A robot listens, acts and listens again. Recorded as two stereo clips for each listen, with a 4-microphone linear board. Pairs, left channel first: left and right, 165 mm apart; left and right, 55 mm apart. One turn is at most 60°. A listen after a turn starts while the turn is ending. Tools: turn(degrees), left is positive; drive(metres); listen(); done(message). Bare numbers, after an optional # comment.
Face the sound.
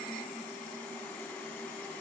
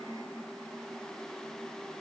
listen()
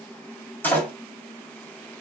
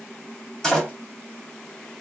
turn(30)
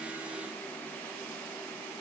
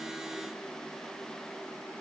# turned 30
listen()
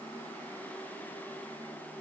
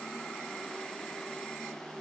done("I heard a door slam, but can't make it out now. It was about 20° right or 140° left.")